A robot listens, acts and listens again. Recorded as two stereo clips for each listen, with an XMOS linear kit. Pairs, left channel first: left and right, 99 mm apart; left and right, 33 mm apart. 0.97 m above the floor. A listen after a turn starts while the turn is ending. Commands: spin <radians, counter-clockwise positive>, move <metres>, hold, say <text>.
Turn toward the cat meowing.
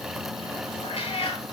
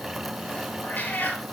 spin 1.57
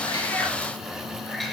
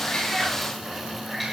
hold
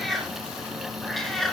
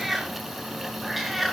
say Facing the cat meowing, 2 to 4 m away.